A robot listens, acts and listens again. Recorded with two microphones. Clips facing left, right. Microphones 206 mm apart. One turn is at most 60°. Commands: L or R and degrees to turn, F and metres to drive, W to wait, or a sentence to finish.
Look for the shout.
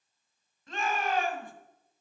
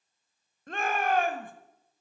R55
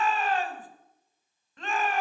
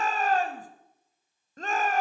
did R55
R55
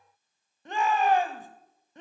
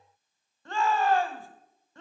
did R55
L20
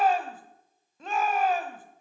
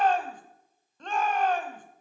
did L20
L10
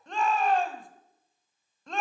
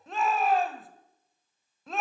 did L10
Found it: a shout, straight ahead, 1 to 2 m away.